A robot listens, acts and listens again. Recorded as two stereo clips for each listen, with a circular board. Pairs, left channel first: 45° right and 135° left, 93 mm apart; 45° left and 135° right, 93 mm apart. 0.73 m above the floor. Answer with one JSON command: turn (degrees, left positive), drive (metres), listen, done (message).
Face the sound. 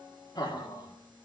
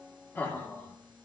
{"turn": -15}
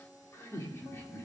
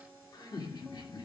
{"turn": 15}
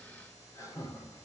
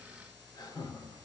{"done": "Found it: laughter, straight ahead."}